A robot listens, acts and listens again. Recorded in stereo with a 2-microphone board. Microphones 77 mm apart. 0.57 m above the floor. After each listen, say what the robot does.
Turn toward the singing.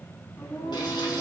Turn 40° left.
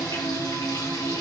Turn 100° left.
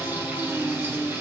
Facing the singing.